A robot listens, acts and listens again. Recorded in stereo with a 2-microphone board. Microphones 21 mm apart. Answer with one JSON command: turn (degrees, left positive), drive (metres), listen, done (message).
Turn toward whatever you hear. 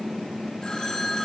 {"turn": 30}
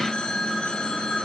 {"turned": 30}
{"turn": 120}
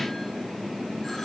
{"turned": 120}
{"listen": true}
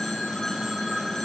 {"turn": 20}
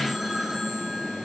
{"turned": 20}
{"done": "Facing the phone ringing, over 4 m away."}